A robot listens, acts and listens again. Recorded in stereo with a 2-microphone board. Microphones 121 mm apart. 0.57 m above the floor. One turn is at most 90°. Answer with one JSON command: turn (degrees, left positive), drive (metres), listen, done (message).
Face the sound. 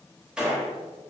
{"turn": -30}
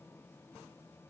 {"listen": true}
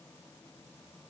{"done": "I heard a gunshot, but can't make it out now. It was about 20° left or 140° right."}